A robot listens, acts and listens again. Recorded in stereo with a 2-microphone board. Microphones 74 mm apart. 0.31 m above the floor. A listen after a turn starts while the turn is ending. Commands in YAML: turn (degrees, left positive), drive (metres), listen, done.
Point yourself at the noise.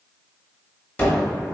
turn: 25
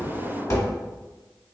turn: 125
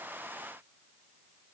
done: "I heard a gunshot from this way, but can't make it out now."